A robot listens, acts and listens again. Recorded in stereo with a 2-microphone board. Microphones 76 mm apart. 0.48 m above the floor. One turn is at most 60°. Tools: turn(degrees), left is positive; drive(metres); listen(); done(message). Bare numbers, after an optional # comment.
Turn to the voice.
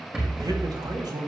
# The man speaking: about 60° right or 120° right.
turn(-60)
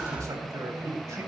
# So it is at 50° right.
turn(-50)
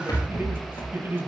# The man speaking is now 30° right.
turn(-30)
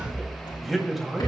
done("Found it: a man speaking, straight ahead.")